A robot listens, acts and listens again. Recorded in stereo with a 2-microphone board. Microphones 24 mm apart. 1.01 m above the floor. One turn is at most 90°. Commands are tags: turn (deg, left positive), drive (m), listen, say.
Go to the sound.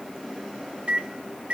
<turn deg="-65"/>
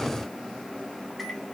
<listen/>
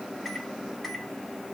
<drive m="1.0"/>
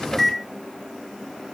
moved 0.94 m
<drive m="1.0"/>
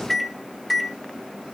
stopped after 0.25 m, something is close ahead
<say>Arrived at the microwave, straight ahead.</say>